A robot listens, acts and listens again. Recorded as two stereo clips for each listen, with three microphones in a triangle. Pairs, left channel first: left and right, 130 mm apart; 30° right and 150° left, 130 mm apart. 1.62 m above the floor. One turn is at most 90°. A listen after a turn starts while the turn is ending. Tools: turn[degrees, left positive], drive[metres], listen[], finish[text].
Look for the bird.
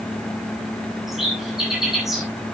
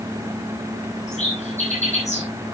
Action: finish[Facing the bird, over 4 m away.]